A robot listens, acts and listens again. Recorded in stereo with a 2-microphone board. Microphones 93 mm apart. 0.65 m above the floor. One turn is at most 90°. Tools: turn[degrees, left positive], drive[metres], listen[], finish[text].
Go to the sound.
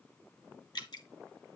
Thought: The dripping: about 50° left or 130° left.
Action: turn[50]
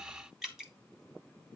Action: drive[1.0]
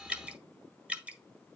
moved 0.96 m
Thought: The dripping is now 15° right.
Action: turn[-15]
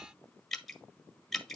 Action: drive[1.0]
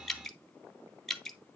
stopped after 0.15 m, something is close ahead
Action: finish[Arrived at the dripping, straight ahead.]